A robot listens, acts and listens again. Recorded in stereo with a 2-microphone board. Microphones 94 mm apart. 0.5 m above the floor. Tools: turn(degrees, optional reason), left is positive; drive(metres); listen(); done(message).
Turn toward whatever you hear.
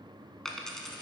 turn(degrees=30)
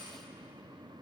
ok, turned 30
turn(degrees=-25, reason="So it is at 25° right.")
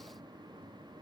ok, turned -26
done("I heard a dropped coin from this way, but can't make it out now.")